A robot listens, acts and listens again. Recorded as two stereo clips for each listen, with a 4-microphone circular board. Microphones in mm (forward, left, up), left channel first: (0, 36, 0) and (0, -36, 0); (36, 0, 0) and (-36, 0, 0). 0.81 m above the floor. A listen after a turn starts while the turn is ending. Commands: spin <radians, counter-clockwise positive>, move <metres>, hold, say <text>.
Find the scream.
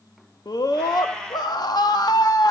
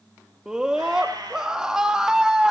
spin 1.75
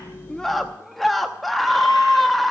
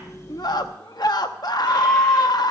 say Found it: a scream, straight ahead.